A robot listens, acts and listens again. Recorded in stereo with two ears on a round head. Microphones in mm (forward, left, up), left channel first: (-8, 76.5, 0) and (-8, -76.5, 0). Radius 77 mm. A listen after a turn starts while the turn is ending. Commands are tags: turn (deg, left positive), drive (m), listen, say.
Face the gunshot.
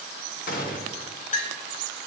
<turn deg="55"/>
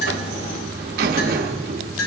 <listen/>
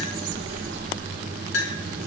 <say>I heard a gunshot, but can't make it out now. It was about straight ahead or 70° left.</say>